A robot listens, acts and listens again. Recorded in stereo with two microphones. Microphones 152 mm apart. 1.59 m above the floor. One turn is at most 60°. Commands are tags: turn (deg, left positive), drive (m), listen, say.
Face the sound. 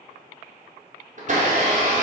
<turn deg="-50"/>
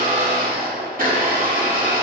<turn deg="-60"/>
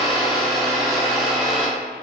<say>Found it: a blender, straight ahead, under 1 m away.</say>